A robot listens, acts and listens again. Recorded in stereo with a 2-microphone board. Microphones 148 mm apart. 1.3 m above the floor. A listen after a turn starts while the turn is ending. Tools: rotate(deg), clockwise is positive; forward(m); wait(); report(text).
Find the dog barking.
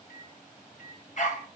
rotate(-60)
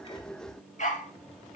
rotate(-60)
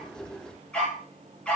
report("Facing the dog barking.")